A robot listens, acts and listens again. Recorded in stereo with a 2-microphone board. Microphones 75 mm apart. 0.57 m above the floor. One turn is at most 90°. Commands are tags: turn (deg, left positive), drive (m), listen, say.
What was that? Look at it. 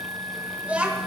<turn deg="-20"/>
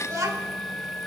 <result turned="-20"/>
<turn deg="-90"/>
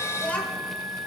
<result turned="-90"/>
<turn deg="20"/>
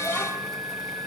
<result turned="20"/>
<listen/>
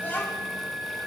<listen/>
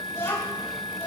<turn deg="35"/>
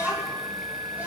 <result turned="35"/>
<turn deg="-25"/>
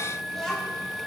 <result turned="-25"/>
<say>Found it: a child speaking, straight ahead.</say>